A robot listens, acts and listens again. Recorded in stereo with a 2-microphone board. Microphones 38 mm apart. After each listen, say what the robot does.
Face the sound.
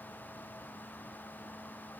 Keep listening.
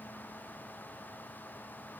Keep listening.
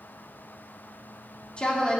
Turn 20° left.
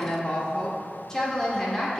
Turn 30° left.
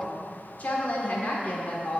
Turn 135° left.
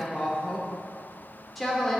Facing the woman speaking, 2 to 4 m away.